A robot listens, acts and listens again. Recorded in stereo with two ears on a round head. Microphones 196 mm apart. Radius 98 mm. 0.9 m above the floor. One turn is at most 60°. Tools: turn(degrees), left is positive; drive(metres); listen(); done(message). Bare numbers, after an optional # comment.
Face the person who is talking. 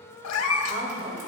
# The woman speaking: about 45° right or 135° right.
turn(-45)
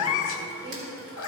listen()
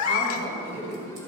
# So it is at 95° right.
turn(-60)
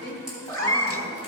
# The woman speaking is now 35° right.
turn(-35)
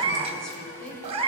done("Facing the woman speaking.")